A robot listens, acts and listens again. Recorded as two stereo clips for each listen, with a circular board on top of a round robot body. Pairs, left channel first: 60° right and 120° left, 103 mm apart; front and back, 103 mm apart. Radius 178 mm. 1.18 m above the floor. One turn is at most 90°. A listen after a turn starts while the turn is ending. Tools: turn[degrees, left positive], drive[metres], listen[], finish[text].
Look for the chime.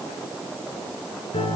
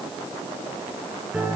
Action: listen[]
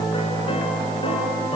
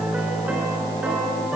Action: listen[]
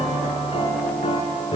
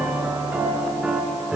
Action: finish[I can't make out a chime, only a piano.]